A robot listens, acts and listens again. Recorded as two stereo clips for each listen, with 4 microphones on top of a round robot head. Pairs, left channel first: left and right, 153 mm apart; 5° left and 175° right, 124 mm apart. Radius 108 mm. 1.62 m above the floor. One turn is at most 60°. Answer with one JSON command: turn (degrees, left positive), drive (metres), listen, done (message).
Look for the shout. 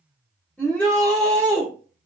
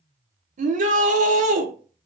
{"turn": 60}
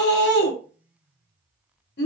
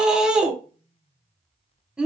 {"turn": 60}
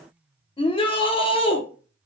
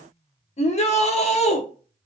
{"turn": 35}
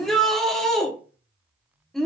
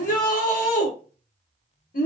{"done": "Found it: a shout, straight ahead, 1 to 2 m away."}